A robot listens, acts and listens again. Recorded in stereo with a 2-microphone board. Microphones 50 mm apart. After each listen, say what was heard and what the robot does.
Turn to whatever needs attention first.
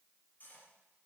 Keep listening.
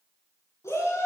Turn 90° left.
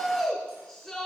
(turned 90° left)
Facing the shout, over 4 m away.